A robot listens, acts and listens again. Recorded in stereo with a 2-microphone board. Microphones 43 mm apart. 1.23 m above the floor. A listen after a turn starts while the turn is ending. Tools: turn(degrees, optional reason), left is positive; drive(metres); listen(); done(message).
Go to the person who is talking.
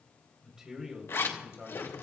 turn(degrees=-15, reason="The man speaking: about 15° right or 165° right.")
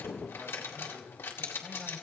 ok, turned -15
listen()
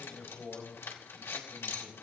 drive(metres=1.0)
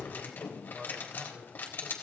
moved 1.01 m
drive(metres=1.0)
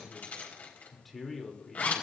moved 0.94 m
drive(metres=1.0)
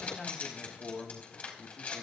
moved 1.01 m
drive(metres=1.0)
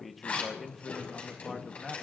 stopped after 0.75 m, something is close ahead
done("Arrived at the man speaking, straight ahead.")